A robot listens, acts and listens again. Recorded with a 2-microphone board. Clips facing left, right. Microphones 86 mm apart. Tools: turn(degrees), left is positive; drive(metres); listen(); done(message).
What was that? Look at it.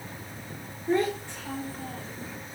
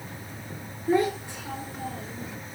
turn(degrees=-30)
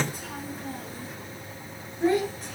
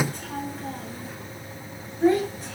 done("Found it: a child speaking, straight ahead.")